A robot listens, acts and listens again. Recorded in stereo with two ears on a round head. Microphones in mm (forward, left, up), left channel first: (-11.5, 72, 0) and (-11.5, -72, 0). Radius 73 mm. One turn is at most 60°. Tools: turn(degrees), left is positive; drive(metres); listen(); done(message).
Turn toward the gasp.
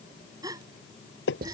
turn(degrees=-25)
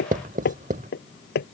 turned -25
listen()
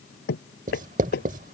done("I heard a gasp, but can't make it out now. It was about straight ahead or 130° right.")